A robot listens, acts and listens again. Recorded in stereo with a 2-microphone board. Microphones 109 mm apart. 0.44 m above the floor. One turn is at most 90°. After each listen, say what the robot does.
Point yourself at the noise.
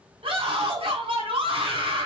Turn 55° right.
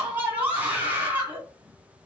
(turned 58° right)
Turn 20° right.
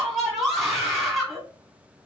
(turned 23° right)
Facing the scream.